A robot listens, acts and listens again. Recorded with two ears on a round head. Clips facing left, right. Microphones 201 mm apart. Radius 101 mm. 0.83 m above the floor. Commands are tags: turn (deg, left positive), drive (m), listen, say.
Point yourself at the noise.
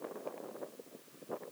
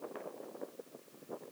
<listen/>
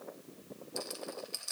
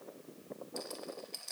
<turn deg="30"/>
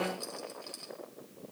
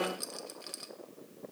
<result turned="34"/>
<turn deg="-25"/>
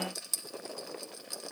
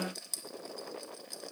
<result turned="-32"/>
<turn deg="10"/>
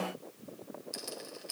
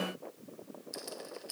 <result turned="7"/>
<say>Facing the rattle, under 1 m away.</say>